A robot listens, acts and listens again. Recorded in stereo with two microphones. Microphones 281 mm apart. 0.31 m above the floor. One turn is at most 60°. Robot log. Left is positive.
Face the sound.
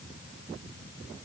cmd idle
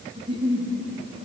note: The giggle: about 20° right or 160° right.
cmd yaw -20
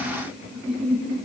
end: Found it: a giggle, straight ahead.